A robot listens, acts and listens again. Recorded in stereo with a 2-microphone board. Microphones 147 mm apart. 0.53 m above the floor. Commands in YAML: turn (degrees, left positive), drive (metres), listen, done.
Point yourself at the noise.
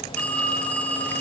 turn: 30
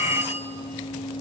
turn: -15
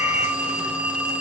turn: -10
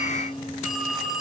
done: "Facing the phone ringing."